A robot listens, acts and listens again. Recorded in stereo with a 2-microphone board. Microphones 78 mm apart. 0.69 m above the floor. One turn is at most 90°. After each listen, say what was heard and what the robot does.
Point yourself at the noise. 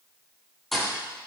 Turn 30° left.
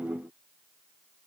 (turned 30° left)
Keep listening.
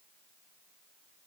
I heard a thud, but can't make it out now. It was about 30° right or 150° left.